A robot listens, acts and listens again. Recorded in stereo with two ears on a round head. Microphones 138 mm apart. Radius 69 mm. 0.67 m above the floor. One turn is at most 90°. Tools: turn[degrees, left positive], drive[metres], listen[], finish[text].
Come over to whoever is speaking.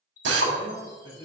Thought: The man speaking: about 20° left or 160° left.
Action: turn[20]
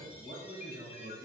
Action: drive[1.0]
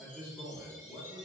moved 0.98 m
Action: drive[1.0]
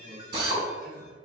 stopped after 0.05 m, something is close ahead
Action: finish[Arrived at the man speaking, straight ahead.]